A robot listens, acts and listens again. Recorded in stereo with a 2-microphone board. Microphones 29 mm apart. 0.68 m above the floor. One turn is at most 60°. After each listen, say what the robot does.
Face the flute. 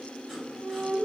Turn 60° left.
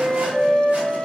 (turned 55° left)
Turn 20° left.
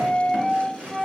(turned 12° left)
Facing the flute.